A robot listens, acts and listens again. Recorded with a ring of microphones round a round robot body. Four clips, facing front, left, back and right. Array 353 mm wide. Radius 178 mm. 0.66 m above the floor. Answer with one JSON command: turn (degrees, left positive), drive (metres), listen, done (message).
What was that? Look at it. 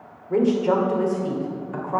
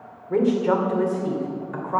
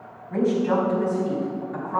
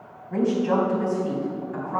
{"turn": 50}
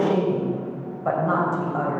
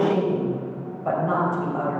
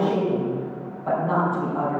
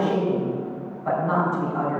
{"turn": 15}
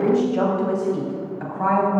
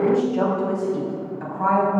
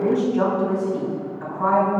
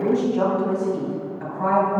{"done": "Found it: a woman speaking, straight ahead."}